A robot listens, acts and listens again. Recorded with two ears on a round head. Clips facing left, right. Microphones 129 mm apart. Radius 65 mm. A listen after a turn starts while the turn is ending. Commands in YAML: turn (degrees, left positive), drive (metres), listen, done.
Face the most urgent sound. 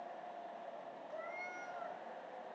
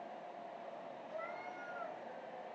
listen: true
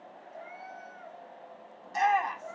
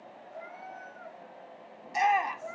turn: -30
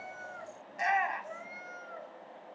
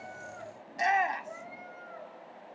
turn: -140
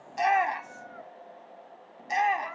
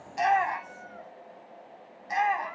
turn: 25
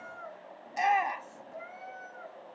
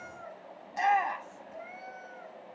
turn: 15
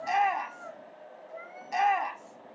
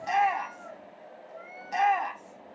done: "Facing the shout, 2 to 4 m away."